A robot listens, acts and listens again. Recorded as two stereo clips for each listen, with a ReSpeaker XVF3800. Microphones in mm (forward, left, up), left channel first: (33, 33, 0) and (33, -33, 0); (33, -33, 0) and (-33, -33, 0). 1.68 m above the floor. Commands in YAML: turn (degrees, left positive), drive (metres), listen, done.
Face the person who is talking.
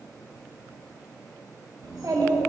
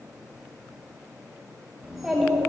turn: -95
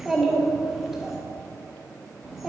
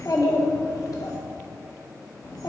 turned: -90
done: "Found it: a child speaking, straight ahead."